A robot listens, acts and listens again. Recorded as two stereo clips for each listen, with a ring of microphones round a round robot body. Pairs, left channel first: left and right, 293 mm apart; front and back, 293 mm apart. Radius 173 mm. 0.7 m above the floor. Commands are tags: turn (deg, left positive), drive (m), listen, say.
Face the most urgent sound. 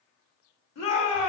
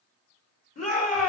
<turn deg="65"/>
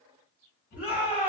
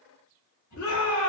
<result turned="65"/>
<say>Found it: a shout, straight ahead, 1 to 2 m away.</say>